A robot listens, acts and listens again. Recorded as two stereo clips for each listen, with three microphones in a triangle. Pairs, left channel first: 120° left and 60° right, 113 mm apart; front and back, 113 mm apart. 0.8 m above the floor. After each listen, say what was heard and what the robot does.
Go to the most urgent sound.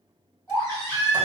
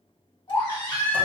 The baby crying: 50° left. Turn 50° left.
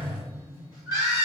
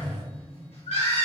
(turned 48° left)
Drive 1.0 m forward.
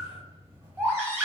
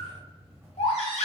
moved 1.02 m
Drive 1.0 m forward.
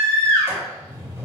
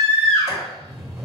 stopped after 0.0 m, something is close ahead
Arrived at the baby crying, straight ahead.